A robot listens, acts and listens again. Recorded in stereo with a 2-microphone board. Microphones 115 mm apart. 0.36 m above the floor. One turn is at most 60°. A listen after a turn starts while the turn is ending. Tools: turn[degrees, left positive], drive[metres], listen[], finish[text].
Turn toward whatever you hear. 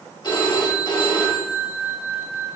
Thought: The phone ringing: about 40° left or 140° left.
Action: turn[40]
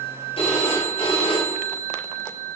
Thought: So it is at 95° left.
Action: turn[60]
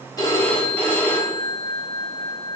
Thought: The phone ringing is now 20° left.
Action: turn[20]
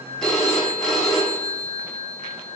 Action: finish[Facing the phone ringing.]